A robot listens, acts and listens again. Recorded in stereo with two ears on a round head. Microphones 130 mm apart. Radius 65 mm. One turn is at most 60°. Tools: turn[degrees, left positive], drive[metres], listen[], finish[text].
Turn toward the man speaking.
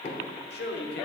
Action: turn[60]
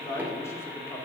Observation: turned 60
Thought: So it is at 15° left.
Action: turn[15]
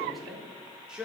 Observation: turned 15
Action: finish[Facing the man speaking, 2 to 4 m away.]